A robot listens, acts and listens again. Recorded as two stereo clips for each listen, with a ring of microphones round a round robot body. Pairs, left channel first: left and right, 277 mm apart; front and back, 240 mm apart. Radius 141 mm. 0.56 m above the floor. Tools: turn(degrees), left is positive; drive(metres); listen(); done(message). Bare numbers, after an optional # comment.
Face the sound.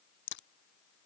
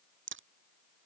# The crack: 140° left.
turn(140)
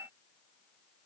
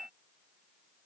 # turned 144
done("I heard a crack from this way, but can't make it out now.")